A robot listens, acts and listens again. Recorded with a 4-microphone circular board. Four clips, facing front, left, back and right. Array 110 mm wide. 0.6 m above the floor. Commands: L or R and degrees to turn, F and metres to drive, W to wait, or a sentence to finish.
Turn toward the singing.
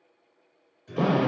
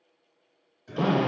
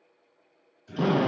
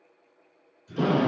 L70
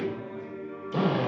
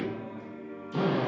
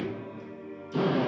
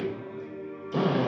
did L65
R10
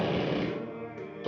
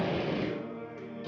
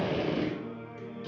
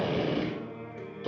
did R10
R30
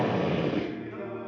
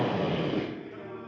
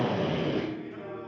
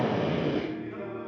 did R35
R50
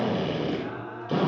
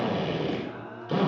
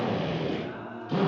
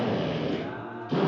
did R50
R25
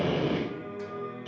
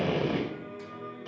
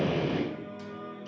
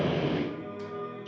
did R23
Found it: singing, straight ahead.